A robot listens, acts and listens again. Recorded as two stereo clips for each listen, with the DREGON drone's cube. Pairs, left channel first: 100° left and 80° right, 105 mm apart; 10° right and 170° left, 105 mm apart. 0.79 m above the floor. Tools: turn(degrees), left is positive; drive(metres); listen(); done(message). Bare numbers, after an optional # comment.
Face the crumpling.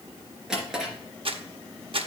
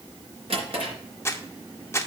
# The crumpling: 75° right.
turn(-75)
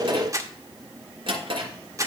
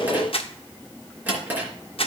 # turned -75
# The crumpling is now 25° right.
turn(-25)
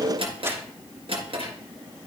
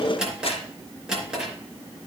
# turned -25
listen()
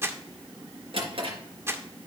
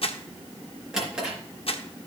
# The crumpling is now 15° right.
turn(-15)
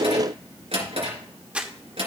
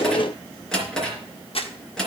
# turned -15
done("Facing the crumpling, 1 to 2 m away.")